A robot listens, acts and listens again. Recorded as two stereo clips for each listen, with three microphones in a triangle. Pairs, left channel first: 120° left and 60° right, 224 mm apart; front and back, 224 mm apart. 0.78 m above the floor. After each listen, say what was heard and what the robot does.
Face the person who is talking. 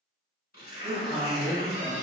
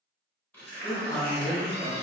The man speaking: 80° right. Turn 80° right.
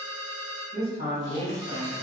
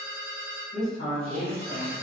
The man speaking is now 20° right. Turn 20° right.
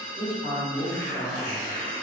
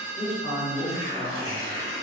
Facing the man speaking.